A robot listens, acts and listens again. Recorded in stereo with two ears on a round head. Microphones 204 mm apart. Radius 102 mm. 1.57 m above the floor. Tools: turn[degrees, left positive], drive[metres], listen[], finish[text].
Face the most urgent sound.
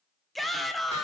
Action: turn[30]
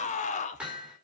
Thought: So it is at 145° left.
Action: turn[145]
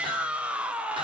Action: finish[Facing the shout.]